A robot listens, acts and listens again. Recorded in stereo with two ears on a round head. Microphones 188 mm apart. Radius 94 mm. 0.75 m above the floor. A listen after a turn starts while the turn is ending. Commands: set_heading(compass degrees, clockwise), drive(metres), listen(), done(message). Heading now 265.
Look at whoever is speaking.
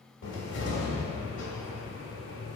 listen()
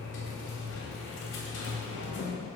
listen()
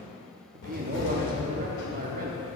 set_heading(305)
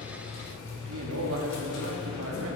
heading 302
set_heading(42)
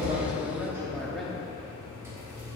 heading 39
done("Facing the man speaking, 1 to 2 m away.")